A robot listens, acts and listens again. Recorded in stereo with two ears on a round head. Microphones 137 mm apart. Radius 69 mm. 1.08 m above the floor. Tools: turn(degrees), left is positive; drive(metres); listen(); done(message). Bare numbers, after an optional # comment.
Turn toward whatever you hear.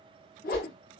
# The whoosh: about 60° left or 120° left.
turn(60)
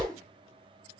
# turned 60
# So it is at 10° left.
turn(10)
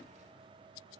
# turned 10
listen()
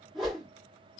done("Found it: a whoosh, straight ahead, 1 to 2 m away.")